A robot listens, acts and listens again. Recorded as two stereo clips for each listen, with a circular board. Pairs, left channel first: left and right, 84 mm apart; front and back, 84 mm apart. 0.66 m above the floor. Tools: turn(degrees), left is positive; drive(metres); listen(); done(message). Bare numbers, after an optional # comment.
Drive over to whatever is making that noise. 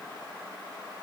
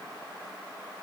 listen()
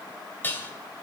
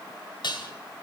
# The dishes clattering: 25° left.
turn(25)
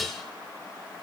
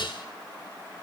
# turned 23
drive(1.0)
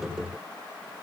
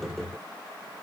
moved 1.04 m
listen()
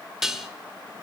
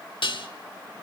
drive(1.0)
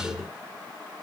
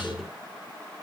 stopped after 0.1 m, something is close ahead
listen()
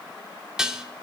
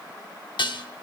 # The dishes clattering is now 10° right.
turn(-10)
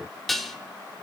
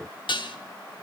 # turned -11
done("I am next to the dishes clattering.")